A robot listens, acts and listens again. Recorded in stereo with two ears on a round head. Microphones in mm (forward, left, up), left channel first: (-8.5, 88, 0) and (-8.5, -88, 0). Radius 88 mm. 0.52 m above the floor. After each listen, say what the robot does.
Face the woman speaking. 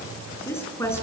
Turn 30° left.
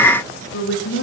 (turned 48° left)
Turn 115° left.
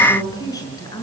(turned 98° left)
Turn 20° left.
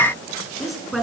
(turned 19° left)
Facing the woman speaking, over 4 m away.